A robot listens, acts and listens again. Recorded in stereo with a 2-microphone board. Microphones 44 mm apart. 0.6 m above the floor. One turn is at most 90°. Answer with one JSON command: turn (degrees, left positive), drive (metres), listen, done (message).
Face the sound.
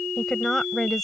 {"turn": 30}
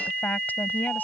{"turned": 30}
{"turn": 90}
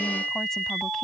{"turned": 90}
{"turn": 45}
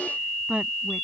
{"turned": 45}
{"turn": -30}
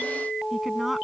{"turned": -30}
{"listen": true}
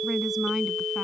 {"listen": true}
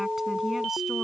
{"done": "Facing where the woman speaking came from. I can't hear it now."}